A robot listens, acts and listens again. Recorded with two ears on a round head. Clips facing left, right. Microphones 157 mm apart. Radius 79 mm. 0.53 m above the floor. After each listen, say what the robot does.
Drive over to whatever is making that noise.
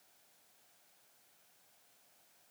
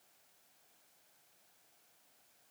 Keep listening.
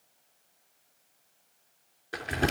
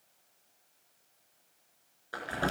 Turn 25° left.
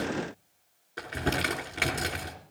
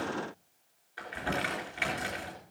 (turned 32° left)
Turn 120° left.
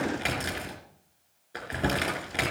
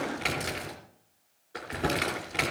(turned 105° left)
Turn 15° left.
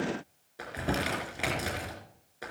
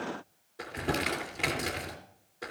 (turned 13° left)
Drive 1.0 m forward.
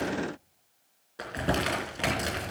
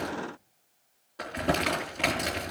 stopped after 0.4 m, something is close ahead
Turn 10° left.
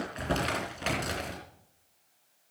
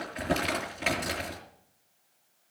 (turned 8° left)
Something is in my way. I am facing the crumpling but have not reached it.